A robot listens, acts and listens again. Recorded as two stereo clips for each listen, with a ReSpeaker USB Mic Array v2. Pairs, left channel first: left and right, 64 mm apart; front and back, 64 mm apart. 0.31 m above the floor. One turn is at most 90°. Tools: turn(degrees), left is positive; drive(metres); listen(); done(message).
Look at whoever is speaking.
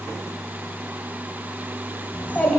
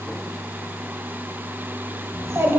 turn(degrees=90)
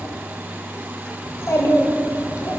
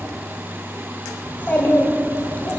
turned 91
turn(degrees=60)
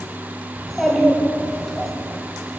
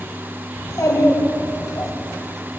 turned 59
done("Facing the child speaking.")